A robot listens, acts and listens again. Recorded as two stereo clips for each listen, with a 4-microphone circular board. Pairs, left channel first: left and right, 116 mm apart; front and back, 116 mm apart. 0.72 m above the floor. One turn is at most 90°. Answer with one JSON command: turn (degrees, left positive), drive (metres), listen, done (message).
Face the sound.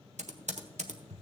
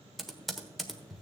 {"turn": -90}
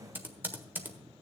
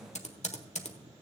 {"turn": -15}
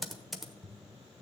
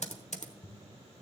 {"done": "Found it: typing on a keyboard, straight ahead, 1 to 2 m away."}